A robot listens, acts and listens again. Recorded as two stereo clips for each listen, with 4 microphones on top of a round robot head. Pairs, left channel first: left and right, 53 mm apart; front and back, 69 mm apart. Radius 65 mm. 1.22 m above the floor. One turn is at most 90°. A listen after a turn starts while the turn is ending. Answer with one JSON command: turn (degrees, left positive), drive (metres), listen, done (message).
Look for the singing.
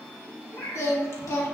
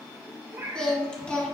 {"turn": 70}
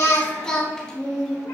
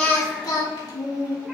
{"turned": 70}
{"done": "Found it: singing, straight ahead."}